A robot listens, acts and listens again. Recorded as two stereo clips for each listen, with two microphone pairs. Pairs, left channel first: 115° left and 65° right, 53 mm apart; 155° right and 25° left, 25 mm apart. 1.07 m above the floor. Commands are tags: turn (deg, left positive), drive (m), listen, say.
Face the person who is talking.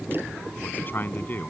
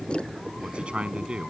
<turn deg="65"/>
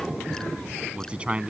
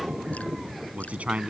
<say>Found it: a man speaking, straight ahead.</say>